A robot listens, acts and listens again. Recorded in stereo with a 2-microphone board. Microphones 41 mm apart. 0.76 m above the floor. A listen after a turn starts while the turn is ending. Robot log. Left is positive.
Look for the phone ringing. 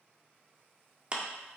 cmd idle
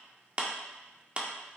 cmd idle
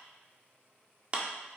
end: I can't make out a phone ringing to turn to.